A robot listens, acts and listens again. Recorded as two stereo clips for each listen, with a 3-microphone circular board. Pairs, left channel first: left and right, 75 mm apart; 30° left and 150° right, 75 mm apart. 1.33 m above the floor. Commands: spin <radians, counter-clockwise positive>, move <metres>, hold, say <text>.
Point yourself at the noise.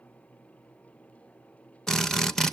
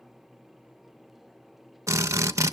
spin 2.97
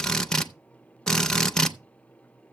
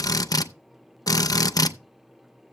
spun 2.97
spin 0.17
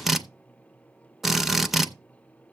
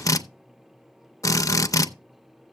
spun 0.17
say Found it: a drill, straight ahead.